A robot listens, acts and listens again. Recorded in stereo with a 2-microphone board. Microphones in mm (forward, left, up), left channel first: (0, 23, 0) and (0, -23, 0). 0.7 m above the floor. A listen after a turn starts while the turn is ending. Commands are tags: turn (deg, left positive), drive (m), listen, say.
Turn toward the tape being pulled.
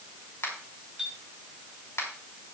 <listen/>
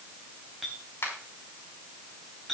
<listen/>
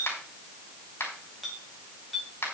<say>I can't make out tape being pulled, only a finger snap and a clink.</say>